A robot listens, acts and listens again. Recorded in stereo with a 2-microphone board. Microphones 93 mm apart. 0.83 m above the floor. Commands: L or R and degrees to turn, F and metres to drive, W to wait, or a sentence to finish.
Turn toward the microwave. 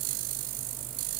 W
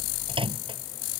R70
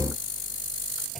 W
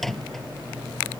Facing the microwave.